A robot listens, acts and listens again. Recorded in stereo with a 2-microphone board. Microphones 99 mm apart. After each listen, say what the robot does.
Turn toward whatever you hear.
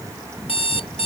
Turn 70° left.
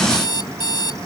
Turn 40° left.
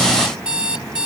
Turn 10° right.
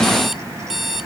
Facing the alarm clock.